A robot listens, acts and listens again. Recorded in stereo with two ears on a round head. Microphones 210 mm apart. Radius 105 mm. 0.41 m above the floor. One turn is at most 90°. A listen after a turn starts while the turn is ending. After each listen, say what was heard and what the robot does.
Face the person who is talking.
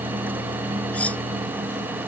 Keep listening.
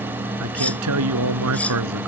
The man speaking: about 75° right or 105° right. Turn 75° right.
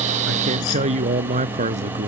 So it is at 30° right. Turn 30° right.
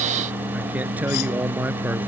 Found it: a man speaking, straight ahead.